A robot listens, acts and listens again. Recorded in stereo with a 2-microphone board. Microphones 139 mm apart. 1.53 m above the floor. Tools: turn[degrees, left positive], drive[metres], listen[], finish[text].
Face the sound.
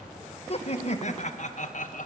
Thought: The laughter: about 65° left or 115° left.
Action: turn[65]
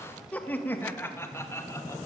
Thought: So it is at 20° left.
Action: turn[20]
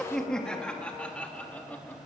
Thought: The laughter is now 10° left.
Action: turn[10]
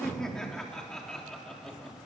Action: finish[Facing the laughter, 2 to 4 m away.]